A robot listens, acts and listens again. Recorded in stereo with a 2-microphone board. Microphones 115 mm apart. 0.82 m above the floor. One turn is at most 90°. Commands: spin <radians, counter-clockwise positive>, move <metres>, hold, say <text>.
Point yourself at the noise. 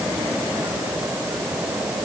hold
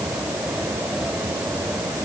hold
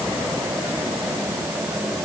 say I can't make out anything to turn to.